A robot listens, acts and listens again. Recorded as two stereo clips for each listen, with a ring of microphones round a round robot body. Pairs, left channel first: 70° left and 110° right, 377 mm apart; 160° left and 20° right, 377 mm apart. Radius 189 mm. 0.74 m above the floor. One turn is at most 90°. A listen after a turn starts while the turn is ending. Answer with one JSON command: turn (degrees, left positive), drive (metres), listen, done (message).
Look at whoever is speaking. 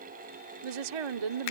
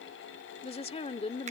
{"turn": -90}
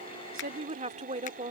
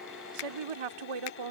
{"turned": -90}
{"turn": -40}
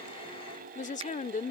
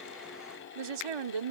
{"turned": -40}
{"done": "Facing the woman speaking."}